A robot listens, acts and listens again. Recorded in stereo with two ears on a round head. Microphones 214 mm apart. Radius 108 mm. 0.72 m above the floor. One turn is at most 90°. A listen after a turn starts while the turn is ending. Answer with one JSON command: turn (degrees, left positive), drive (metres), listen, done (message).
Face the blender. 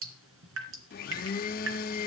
{"turn": 40}
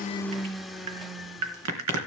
{"done": "Found it: a blender, straight ahead."}